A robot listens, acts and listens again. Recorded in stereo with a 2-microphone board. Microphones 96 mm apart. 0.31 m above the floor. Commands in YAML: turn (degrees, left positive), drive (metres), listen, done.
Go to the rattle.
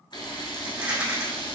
turn: -30
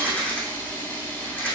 turn: 15
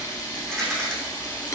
drive: 1.0
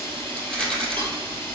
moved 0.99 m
turn: 10
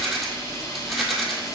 drive: 1.0
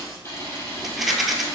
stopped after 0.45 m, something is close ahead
done: "I am next to the rattle."